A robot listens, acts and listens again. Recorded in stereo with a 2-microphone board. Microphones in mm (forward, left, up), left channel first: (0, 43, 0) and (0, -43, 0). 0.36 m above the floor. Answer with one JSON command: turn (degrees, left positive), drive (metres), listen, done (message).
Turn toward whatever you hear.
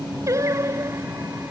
{"turn": -35}
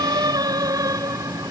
{"turn": -45}
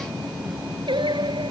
{"turn": -115}
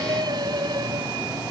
{"turn": -50}
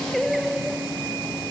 {"done": "Found it: singing, straight ahead."}